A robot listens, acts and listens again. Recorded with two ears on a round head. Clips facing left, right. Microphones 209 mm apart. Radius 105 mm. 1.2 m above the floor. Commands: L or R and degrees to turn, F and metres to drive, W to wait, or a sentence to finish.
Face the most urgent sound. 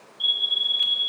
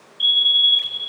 R35
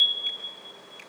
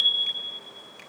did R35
R110
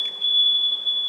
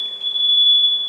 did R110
R35
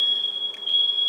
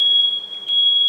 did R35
Facing the fire alarm, 2 to 4 m away.